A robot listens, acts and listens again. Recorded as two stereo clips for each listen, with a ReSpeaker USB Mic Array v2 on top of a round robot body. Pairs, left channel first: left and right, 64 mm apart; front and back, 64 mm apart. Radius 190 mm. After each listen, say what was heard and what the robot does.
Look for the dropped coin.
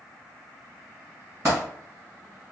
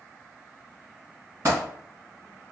The dropped coin: 130° right. Turn 130° right.
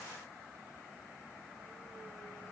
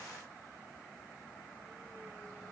Facing where the dropped coin came from. I can't hear it now.